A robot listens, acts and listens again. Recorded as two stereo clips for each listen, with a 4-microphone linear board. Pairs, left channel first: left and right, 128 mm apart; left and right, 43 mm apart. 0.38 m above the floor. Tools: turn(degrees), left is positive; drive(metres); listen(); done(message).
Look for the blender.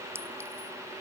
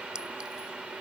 listen()
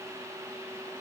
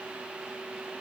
listen()
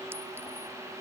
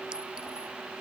done("I can't make out a blender to turn to.")